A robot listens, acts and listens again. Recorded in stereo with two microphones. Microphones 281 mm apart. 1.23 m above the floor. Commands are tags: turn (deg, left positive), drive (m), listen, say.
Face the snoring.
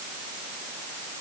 <listen/>
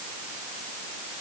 <listen/>
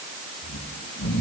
<turn deg="90"/>
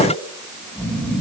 <say>Facing the snoring.</say>